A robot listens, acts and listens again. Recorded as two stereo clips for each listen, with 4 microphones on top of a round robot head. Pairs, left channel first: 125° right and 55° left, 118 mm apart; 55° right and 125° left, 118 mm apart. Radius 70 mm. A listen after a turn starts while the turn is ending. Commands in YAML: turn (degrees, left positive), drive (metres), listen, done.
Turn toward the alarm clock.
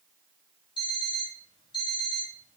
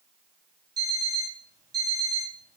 turn: -175
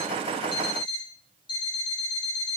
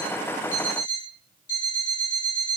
turn: -75
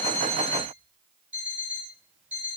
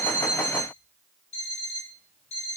turn: -20
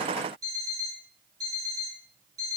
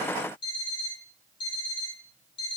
done: "Facing the alarm clock."